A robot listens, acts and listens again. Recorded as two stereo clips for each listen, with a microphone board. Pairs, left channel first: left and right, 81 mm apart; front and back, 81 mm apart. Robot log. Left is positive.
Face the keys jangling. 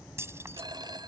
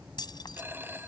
note: The keys jangling: 30° right.
cmd yaw -30
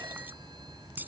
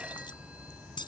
note: The keys jangling is now 20° right.
cmd yaw -20
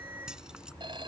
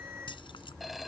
cmd idle
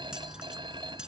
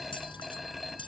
note: The keys jangling is now 10° right.
cmd yaw -10
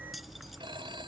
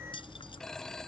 cmd idle
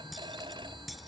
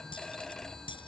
cmd idle
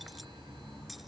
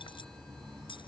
end: I heard keys jangling from this way, but can't make it out now.